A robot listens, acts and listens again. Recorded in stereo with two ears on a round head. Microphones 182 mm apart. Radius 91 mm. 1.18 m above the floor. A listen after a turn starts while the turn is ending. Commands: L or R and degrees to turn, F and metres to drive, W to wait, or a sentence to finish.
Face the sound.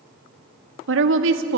R70
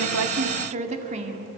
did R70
R35
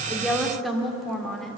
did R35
Facing the woman speaking, 2 to 4 m away.